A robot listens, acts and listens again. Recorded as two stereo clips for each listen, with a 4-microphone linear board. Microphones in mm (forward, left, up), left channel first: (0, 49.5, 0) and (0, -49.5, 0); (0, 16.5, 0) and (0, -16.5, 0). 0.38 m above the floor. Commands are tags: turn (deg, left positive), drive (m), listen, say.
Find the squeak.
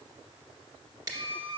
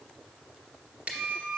<turn deg="-70"/>
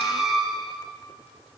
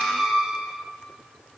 <say>Found it: a squeak, straight ahead, under 1 m away.</say>